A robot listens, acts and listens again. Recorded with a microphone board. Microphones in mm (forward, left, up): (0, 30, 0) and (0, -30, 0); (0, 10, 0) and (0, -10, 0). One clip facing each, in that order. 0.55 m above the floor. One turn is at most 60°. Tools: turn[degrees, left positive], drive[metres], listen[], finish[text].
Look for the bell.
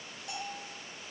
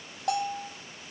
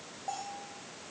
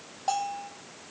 Thought: The bell: about 65° right or 115° right.
Action: turn[-60]
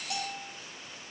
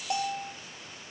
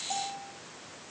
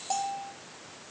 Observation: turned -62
Thought: So it is at 35° right.
Action: turn[-35]
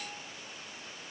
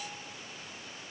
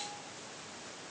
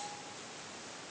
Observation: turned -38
Action: listen[]
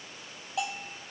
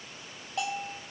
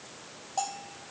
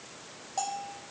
Action: finish[Found it: a bell, straight ahead.]